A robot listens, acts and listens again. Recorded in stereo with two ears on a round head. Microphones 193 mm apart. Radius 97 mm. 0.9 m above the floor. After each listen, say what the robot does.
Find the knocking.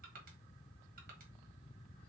Keep listening.
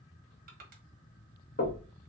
Turn 45° left.
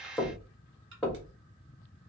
Facing the knocking.